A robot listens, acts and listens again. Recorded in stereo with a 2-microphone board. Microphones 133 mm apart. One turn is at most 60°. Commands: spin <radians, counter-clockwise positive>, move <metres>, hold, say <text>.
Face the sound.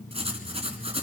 spin -0.87
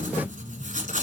spin -1.05
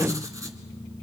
spin -0.44
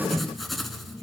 say Facing the writing, 1 to 2 m away.